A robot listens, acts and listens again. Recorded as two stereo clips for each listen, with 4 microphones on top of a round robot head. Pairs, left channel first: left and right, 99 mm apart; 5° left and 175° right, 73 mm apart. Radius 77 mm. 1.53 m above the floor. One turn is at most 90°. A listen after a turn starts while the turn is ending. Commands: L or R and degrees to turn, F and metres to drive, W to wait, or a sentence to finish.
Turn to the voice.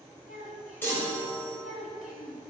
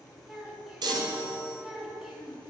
L90
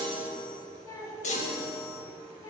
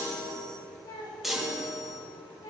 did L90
L35
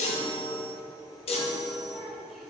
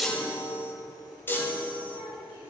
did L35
Found it: a child speaking, straight ahead.